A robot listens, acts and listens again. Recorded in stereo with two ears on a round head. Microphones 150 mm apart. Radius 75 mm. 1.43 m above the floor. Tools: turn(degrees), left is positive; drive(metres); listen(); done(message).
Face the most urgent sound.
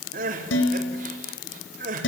turn(degrees=-50)
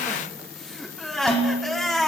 done("Facing the crying, over 4 m away.")